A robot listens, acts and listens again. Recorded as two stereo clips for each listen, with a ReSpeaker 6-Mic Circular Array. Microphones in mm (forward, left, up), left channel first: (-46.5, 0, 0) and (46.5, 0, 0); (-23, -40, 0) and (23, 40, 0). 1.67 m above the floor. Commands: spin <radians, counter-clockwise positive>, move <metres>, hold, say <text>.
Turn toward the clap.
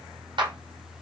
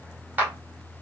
spin -0.17
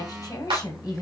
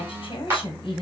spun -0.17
say Facing the clap, 2 to 4 m away.